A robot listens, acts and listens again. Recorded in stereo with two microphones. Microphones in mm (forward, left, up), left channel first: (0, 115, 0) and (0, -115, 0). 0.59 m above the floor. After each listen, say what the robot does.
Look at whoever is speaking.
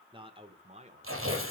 Turn 30° right.
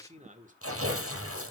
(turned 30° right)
Turn 35° right.
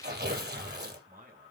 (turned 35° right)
Turn 40° right.
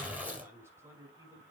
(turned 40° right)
Turn 10° right.
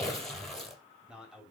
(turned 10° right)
Facing the man speaking.